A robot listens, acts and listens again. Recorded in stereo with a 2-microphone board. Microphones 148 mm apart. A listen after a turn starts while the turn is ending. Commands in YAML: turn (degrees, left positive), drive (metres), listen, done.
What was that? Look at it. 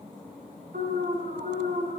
turn: -70
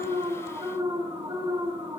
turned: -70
turn: -30
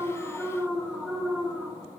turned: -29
done: "Found it: an alarm, straight ahead, over 4 m away."